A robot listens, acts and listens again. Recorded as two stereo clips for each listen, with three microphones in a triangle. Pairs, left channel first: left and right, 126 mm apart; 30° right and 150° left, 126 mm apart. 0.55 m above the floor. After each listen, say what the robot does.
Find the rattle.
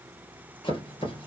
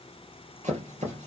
Keep listening.
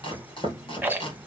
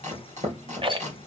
Turn 165° right.
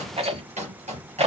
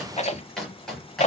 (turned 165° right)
Turn 55° right.
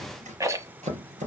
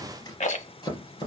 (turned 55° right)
Turn 25° right.
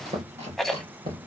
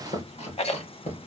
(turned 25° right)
Facing the rattle, 1 to 2 m away.